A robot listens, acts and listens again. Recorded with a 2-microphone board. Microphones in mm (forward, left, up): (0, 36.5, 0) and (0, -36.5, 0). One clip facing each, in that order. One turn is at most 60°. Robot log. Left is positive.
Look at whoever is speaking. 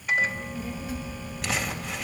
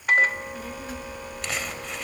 note: The child speaking: about 55° right or 125° right.
cmd yaw -55
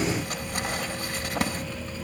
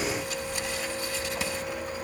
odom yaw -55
end: Found it: a child speaking, straight ahead.